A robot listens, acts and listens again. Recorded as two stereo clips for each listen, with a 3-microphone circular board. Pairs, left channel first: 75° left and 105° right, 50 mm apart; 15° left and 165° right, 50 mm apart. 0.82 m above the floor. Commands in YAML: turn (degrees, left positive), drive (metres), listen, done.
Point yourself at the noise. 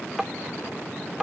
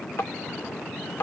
turn: -25
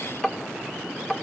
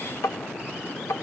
done: "Found it: tapping, straight ahead."